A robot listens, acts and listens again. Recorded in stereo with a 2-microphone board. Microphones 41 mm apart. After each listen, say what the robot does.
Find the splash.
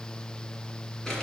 Keep listening.
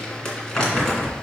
Keep listening.
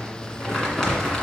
I can't make out a splash, only crumpling.